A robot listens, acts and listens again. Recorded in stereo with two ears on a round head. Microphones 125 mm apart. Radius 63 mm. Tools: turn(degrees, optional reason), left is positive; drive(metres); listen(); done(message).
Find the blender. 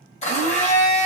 turn(degrees=50, reason="The blender: about 50° left or 130° left.")
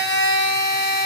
turn(degrees=80, reason="So it is at 80° left.")
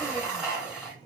done("Facing the blender.")